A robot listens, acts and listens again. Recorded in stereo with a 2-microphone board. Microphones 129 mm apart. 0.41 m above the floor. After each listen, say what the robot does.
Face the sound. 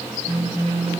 Turn 65° right.
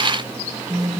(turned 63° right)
Turn 35° right.
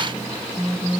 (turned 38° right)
Facing the phone buzzing.